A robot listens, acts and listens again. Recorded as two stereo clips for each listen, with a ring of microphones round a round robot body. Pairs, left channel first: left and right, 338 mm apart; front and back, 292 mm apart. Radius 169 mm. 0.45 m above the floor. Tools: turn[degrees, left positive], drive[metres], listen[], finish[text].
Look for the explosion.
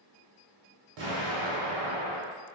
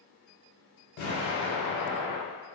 Thought: The explosion: 55° right.
Action: turn[-55]
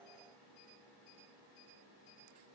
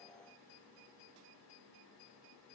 Action: finish[Facing where the explosion came from. I can't hear it now.]